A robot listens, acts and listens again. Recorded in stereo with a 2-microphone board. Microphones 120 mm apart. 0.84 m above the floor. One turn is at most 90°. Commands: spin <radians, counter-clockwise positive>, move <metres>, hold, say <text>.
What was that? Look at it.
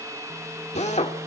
spin 1.13
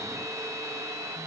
hold
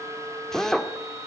say Facing the drill, 1 to 2 m away.